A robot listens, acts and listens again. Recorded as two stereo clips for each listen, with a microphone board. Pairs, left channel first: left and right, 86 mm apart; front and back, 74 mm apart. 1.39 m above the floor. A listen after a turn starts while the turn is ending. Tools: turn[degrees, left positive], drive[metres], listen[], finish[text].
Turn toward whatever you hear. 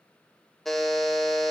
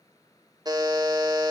Thought: The buzzer: 175° left.
Action: turn[175]
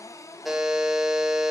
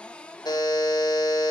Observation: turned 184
Thought: The buzzer is now 10° right.
Action: turn[-10]
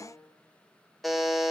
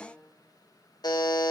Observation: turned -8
Action: finish[Facing the buzzer.]